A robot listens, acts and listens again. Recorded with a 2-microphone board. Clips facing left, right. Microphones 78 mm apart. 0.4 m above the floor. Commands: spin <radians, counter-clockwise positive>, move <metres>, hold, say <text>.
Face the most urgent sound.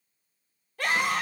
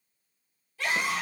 spin 0.96
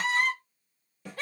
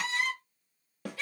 spin 0.96
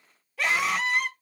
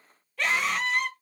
say Facing the scream, 1 to 2 m away.